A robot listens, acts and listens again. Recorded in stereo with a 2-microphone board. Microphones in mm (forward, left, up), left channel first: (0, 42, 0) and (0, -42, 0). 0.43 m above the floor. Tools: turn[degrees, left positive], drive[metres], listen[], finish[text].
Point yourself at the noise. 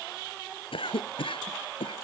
Action: turn[90]
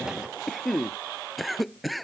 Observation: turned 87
Action: finish[Found it: a cough, straight ahead.]